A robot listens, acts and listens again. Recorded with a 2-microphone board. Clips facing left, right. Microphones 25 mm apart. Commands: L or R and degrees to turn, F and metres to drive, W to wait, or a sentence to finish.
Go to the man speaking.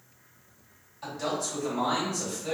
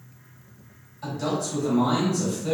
L15
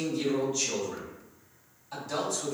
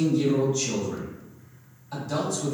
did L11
F1.0
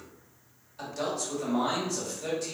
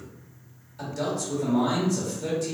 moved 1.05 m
L15
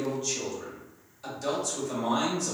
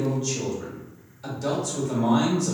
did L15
F1.0
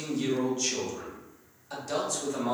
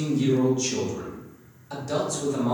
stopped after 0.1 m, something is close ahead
Arrived at the man speaking, straight ahead.